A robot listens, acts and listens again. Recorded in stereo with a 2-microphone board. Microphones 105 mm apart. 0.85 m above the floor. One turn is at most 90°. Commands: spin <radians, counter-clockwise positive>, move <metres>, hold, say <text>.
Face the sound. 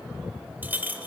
spin -0.26
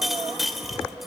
say Facing the clink, 1 to 2 m away.